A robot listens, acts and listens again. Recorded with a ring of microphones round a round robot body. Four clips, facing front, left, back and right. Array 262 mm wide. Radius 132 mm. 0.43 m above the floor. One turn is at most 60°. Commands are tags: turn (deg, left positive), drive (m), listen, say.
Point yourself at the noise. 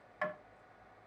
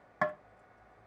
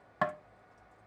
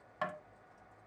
<turn deg="60"/>
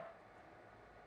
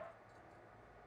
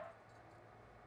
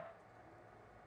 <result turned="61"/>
<turn deg="60"/>
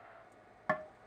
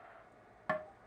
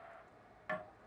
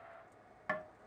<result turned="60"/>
<turn deg="25"/>
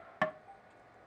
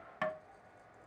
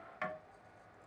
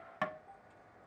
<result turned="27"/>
<say>Found it: tapping, straight ahead.</say>